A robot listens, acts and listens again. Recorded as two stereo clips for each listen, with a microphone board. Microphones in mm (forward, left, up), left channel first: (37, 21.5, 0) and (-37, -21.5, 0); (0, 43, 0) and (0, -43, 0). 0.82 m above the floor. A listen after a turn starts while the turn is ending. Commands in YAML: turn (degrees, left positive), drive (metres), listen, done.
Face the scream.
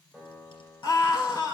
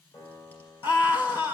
turn: 65
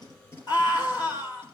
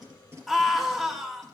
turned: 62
done: "Facing the scream, 2 to 4 m away."